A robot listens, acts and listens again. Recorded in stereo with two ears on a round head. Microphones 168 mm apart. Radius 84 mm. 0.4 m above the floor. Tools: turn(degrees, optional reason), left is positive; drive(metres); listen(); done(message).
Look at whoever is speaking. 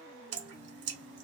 listen()
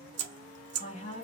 turn(degrees=40, reason="The woman speaking: about 40° left or 140° left.")
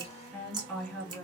done("Facing the woman speaking, 2 to 4 m away.")